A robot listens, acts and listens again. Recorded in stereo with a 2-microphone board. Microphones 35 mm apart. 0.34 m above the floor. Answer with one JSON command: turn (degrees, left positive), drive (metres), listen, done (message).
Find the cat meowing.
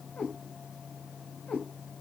{"turn": 45}
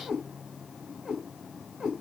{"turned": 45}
{"done": "Facing the cat meowing."}